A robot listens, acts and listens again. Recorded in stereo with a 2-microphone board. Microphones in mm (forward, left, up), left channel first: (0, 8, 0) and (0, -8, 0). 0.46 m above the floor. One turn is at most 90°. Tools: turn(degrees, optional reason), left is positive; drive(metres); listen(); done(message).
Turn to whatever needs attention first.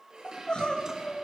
turn(degrees=90)
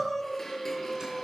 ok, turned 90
turn(degrees=15, reason="So it is at 15° left.")
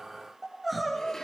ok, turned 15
done("Found it: crying, straight ahead, 2 to 4 m away.")